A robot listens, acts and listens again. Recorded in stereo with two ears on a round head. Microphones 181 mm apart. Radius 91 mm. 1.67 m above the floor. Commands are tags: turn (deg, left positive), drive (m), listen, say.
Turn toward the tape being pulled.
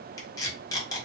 <turn deg="15"/>
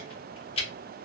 <turn deg="150"/>
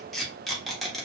<say>Facing the tape being pulled.</say>